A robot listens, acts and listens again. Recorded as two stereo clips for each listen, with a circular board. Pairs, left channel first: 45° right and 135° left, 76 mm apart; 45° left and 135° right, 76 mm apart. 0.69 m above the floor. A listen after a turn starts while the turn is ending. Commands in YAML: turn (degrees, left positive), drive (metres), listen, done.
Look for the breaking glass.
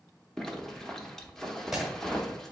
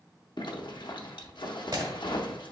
turn: -135
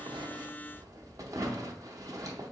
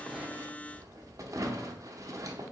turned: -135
done: "Facing where the breaking glass came from. I can't hear it now."